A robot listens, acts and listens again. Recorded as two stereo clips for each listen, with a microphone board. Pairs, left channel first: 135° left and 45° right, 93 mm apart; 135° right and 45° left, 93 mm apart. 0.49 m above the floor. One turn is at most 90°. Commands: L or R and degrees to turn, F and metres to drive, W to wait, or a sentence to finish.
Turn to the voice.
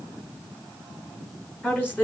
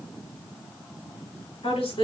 R90
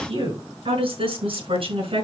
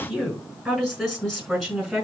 R45
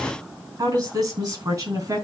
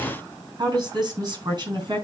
Found it: a woman speaking, straight ahead.